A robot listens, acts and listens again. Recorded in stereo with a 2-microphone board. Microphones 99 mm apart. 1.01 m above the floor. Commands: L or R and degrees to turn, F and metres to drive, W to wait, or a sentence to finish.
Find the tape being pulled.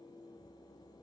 W
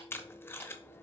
L25
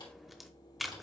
Facing the tape being pulled.